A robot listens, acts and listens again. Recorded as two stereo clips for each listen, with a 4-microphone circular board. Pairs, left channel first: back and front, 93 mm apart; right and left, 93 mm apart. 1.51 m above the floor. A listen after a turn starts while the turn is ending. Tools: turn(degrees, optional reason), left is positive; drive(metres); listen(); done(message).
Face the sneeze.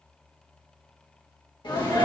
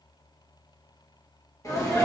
turn(degrees=-145, reason="The sneeze: 145° right.")
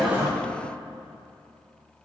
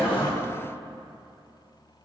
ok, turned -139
done("I heard a sneeze from this way, but can't make it out now.")